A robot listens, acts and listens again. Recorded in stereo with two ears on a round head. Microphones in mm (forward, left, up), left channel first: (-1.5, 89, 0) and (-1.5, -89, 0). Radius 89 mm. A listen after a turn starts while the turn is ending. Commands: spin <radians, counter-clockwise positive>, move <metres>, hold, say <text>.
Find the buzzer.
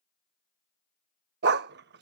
hold
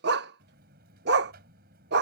spin -0.96
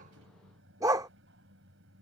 spin -1.22
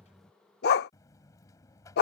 spin 0.26
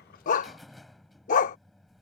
say Facing the buzzer.